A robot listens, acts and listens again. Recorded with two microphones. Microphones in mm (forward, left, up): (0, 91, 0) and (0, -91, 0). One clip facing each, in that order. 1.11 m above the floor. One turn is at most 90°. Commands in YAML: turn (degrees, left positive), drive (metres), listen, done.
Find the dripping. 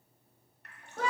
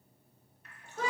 turn: 65
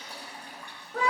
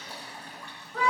turn: 15
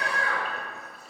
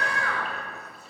listen: true
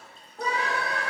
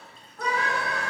listen: true
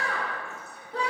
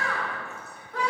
done: "I heard dripping from this way, but can't make it out now."